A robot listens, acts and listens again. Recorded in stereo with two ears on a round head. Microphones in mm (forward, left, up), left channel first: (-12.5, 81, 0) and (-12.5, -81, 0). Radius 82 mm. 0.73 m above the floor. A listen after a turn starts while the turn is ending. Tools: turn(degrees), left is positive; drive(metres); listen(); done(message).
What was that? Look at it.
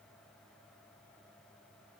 listen()
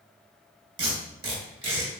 turn(degrees=-30)
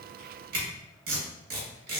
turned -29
turn(degrees=-120)
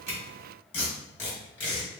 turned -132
turn(degrees=10)
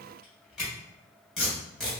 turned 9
done("Facing the tape being pulled.")